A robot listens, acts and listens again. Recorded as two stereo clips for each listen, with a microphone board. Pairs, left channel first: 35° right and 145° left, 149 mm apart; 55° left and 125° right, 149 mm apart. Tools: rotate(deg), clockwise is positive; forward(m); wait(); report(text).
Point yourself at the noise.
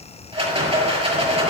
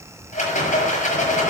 rotate(-95)
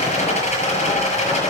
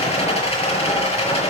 rotate(-10)
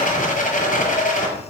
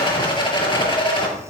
report("Facing the rattle.")